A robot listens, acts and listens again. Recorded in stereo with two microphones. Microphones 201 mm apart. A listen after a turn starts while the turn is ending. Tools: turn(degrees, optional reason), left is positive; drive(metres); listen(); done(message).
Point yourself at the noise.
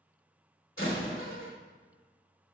turn(degrees=70, reason="The door slam: about 70° left or 110° left.")
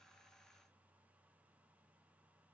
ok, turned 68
listen()
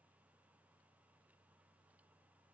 done("I heard a door slam, but can't make it out now. It was about 5° left or 40° left.")